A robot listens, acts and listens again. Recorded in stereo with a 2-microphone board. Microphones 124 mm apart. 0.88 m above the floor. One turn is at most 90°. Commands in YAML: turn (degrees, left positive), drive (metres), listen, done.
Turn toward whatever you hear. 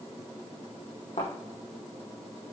turn: 90
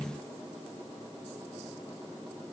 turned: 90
done: "Facing where the thud came from. I can't hear it now."